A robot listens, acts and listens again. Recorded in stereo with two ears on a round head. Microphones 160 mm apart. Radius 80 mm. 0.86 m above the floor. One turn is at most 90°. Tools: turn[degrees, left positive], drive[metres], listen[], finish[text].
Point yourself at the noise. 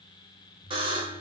Thought: The buzzer: about 30° right or 150° right.
Action: turn[-30]
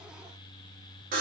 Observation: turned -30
Thought: So it is at 115° right.
Action: turn[-90]
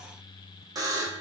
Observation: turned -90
Thought: The buzzer is now 25° right.
Action: turn[-25]
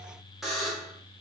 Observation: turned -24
Action: finish[Found it: a buzzer, straight ahead.]